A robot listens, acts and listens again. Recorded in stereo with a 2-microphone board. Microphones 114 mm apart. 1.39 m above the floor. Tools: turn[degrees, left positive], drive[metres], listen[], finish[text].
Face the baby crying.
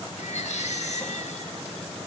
Action: turn[90]
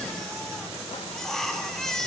Action: finish[Found it: a baby crying, straight ahead.]